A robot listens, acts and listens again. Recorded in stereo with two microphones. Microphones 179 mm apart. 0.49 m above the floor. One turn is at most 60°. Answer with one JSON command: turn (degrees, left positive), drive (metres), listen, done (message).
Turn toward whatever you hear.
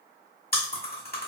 {"turn": 60}
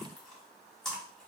{"done": "Facing the chewing."}